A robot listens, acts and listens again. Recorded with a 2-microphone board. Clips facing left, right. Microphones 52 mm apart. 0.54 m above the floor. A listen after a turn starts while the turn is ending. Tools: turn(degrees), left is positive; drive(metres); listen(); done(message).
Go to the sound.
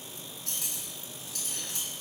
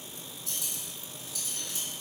turn(degrees=60)
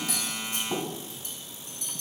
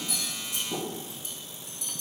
turn(degrees=55)
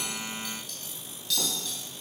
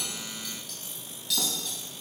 drive(metres=1.0)
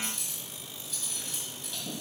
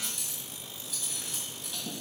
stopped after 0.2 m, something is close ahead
done("Something is in my way. I am facing the cutlery clinking but have not reached it.")